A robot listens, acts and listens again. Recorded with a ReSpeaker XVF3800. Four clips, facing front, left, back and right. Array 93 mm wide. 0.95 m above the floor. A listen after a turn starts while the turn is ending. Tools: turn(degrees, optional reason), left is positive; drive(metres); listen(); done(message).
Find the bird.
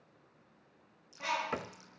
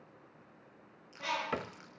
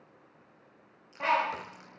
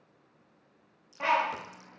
turn(degrees=-130, reason="The bird: 130° right.")
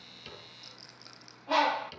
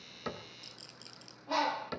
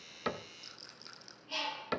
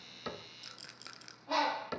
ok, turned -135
done("Facing the bird, 1 to 2 m away.")